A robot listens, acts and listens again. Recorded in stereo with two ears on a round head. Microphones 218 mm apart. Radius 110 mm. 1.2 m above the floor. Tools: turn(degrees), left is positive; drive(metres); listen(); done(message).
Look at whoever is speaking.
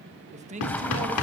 turn(degrees=-30)
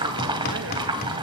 listen()
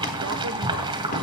listen()
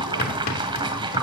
done("I heard a man speaking, but can't make it out now. It was about straight ahead or 120° right.")